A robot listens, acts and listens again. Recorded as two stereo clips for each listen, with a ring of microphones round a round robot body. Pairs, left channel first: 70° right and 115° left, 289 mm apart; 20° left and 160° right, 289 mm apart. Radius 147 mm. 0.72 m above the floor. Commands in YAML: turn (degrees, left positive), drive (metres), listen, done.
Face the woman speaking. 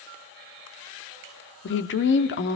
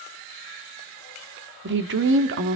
turn: -115
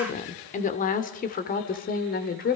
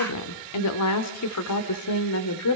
turn: -10
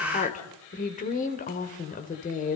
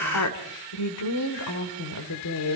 done: "Facing the woman speaking, 2 to 4 m away."